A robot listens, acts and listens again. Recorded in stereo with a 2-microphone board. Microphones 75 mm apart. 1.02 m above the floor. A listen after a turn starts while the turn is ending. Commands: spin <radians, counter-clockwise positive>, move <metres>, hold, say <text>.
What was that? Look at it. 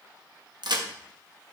spin -1.31
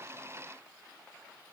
hold
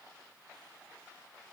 say I heard a crack, but can't make it out now. It was about straight ahead or 30° right.